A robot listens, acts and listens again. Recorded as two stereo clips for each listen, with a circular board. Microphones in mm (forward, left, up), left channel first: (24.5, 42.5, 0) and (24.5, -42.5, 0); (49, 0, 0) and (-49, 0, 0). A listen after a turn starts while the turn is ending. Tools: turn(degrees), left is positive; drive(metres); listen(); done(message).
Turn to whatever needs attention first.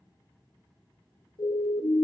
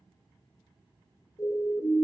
turn(degrees=60)
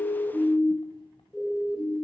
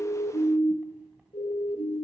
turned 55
done("Found it: a siren, straight ahead, 2 to 4 m away.")